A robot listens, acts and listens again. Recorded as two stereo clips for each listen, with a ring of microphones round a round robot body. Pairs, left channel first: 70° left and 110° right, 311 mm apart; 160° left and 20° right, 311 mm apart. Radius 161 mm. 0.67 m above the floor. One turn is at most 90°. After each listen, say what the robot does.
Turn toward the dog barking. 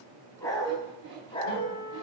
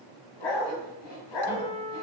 Turn 90° left.
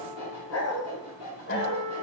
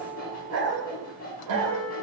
Turn 10° left.
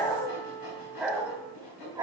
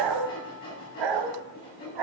Turn 35° right.
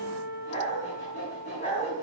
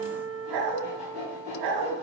Facing the dog barking.